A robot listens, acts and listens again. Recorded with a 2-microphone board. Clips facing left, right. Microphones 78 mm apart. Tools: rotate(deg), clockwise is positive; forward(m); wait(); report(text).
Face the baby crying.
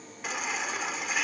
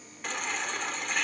rotate(-30)
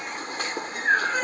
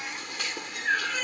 rotate(-145)
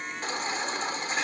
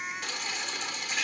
rotate(-35)
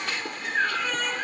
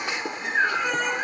rotate(20)
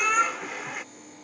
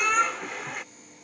report("Found it: a baby crying, straight ahead.")